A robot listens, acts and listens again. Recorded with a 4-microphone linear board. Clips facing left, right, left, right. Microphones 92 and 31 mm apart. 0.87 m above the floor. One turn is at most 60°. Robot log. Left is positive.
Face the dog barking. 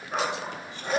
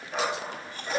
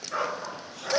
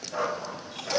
note: The dog barking: about 55° left or 125° left.
cmd yaw +55
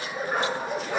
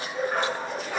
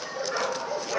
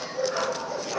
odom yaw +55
note: So it is at 10° left.
cmd yaw +10
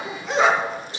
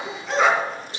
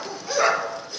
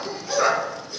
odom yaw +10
end: Found it: a dog barking, straight ahead, 2 to 4 m away.